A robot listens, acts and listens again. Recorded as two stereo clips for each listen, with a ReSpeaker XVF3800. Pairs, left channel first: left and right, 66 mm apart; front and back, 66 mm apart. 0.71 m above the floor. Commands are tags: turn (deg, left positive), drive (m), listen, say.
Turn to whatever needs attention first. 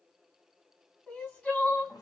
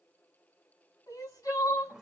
<turn deg="15"/>
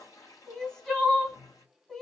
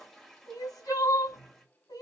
<say>Facing the crying.</say>